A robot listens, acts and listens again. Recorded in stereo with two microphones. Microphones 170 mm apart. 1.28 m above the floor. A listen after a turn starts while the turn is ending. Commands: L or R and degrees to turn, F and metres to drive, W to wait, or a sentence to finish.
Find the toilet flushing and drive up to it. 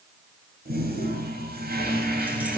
R65
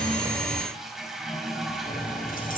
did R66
F1.0
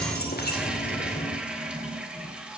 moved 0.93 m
F1.0
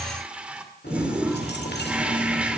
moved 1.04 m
F1.0
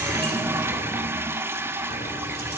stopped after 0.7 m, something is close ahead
R15
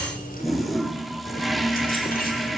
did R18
I am next to the toilet flushing.